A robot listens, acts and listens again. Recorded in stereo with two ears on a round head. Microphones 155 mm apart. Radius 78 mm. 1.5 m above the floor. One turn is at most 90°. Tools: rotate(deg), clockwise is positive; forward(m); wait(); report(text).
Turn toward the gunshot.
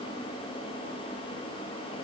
wait()
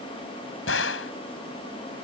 rotate(-90)
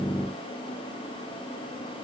report("Facing where the gunshot came from. I can't hear it now.")